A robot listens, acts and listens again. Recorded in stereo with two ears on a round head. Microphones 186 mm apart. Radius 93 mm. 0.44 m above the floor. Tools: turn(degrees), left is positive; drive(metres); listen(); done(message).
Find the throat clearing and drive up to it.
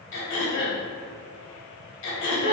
turn(degrees=60)
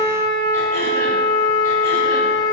listen()
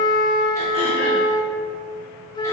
listen()
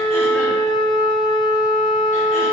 done("I heard throat clearing, but can't make it out now. It was about straight ahead or 60° left. I did not reach it.")